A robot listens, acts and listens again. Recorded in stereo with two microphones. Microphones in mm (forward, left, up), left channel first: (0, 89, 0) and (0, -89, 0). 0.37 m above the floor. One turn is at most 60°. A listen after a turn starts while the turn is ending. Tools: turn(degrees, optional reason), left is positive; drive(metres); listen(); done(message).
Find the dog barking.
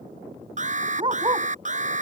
turn(degrees=-25, reason="The dog barking: about 25° right or 155° right.")
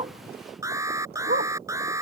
turn(degrees=-60, reason="So it is at 120° right.")
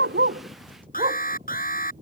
turn(degrees=-45, reason="The dog barking is now 45° right.")
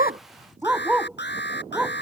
done("Facing the dog barking.")